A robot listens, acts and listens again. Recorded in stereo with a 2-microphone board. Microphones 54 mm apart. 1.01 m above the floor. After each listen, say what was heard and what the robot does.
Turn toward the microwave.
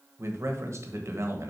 Keep listening.
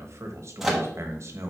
Turn 30° right.
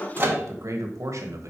So it is at 140° right. Turn 140° right.
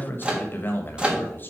The microwave is now 15° right. Turn 15° right.
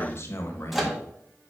Facing the microwave, 1 to 2 m away.